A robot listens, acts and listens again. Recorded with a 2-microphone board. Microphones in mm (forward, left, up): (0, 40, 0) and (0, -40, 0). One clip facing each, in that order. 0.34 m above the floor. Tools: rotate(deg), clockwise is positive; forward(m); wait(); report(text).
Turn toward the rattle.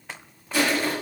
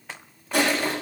wait()
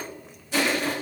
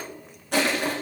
wait()
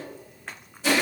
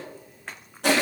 report("I can't make out a rattle to turn to.")